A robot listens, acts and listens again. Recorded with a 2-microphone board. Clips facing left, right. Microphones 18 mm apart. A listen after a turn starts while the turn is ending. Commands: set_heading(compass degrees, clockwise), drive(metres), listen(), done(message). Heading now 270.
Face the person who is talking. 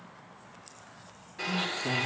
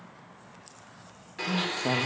set_heading(315)
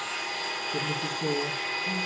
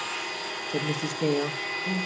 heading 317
set_heading(42)
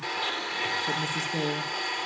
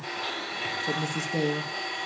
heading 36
done("Facing the woman speaking.")